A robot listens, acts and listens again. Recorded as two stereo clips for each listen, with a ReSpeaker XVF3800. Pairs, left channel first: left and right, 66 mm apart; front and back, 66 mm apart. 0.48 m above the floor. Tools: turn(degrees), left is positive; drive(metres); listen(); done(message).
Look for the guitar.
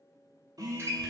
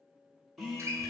turn(degrees=-135)
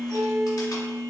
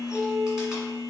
turn(degrees=-40)
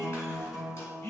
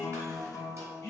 done("Facing the guitar.")